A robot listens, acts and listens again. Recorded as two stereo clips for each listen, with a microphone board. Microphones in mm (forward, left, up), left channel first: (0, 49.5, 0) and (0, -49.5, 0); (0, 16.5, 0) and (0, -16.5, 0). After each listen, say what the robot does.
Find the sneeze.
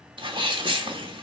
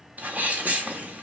Turn 55° right.
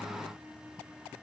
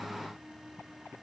Keep listening.
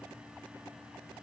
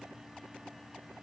I heard a sneeze, but can't make it out now. It was about straight ahead or 70° right.